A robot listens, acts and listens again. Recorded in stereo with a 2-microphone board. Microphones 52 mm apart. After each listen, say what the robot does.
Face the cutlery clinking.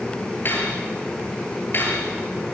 Turn 45° left.
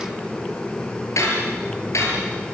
Turn 85° left.
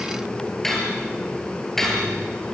Facing the cutlery clinking.